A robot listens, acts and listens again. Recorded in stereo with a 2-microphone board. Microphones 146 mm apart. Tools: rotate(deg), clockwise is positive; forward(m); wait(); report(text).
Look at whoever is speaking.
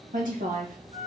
rotate(70)
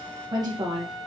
rotate(35)
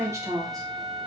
rotate(25)
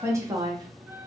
rotate(25)
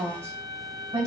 rotate(25)
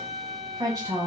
rotate(20)
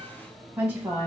report("Facing the woman speaking.")